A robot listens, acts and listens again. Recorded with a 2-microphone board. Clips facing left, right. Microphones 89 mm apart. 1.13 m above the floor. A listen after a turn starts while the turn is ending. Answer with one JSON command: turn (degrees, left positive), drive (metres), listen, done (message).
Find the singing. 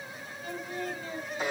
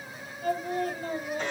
{"turn": -40}
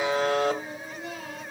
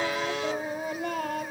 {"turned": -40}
{"turn": -125}
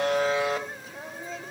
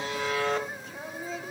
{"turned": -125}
{"done": "Facing the singing, 1 to 2 m away."}